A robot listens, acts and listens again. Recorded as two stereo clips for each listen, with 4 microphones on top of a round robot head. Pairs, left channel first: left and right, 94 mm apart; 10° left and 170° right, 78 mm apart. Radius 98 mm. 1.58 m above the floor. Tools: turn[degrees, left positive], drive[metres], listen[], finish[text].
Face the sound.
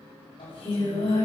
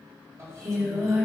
Thought: The singing: 135° left.
Action: turn[135]
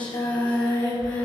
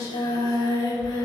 Thought: The singing is now 50° left.
Action: turn[50]
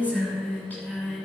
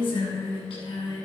Thought: The singing is now 15° left.
Action: turn[15]
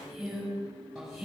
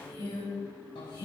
Action: finish[Found it: singing, straight ahead.]